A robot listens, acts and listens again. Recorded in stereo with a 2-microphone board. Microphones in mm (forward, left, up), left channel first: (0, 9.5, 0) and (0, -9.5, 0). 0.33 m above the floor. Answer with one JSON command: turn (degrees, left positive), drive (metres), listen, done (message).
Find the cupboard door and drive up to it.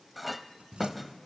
{"turn": -75}
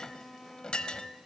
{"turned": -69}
{"listen": true}
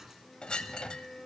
{"turn": -25}
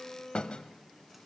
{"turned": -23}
{"listen": true}
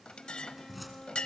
{"drive": 1.0}
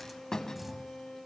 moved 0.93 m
{"turn": -10}
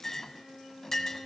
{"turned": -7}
{"listen": true}
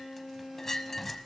{"listen": true}
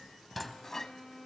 {"drive": 1.0}
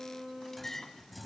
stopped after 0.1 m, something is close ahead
{"done": "I am next to the cupboard door."}